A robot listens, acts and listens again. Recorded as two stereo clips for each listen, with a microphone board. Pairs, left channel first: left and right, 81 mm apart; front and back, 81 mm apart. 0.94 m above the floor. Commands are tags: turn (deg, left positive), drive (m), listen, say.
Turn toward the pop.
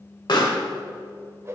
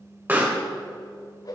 <turn deg="115"/>
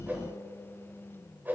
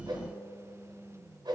<say>Facing where the pop came from. I can't hear it now.</say>